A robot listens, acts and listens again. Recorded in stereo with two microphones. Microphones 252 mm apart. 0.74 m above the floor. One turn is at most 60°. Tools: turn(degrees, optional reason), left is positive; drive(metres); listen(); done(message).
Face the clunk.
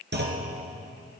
turn(degrees=-45, reason="The clunk: about 45° right or 135° right.")
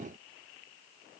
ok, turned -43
listen()
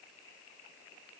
done("I heard a clunk, but can't make it out now. It was about straight ahead or 95° right.")